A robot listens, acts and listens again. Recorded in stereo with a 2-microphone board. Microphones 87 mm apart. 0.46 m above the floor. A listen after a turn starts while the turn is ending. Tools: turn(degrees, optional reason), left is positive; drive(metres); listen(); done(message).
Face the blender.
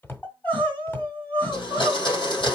turn(degrees=55, reason="The blender: about 55° left or 125° left.")
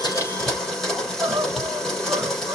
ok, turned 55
done("Found it: a blender, straight ahead.")